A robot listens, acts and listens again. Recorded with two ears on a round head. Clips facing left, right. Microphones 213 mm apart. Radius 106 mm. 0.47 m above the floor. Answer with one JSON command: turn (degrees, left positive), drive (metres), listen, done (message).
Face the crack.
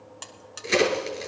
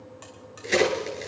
{"turn": 30}
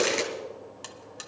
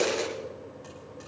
{"turn": 145}
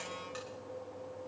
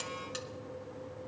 {"done": "I heard a crack from this way, but can't make it out now."}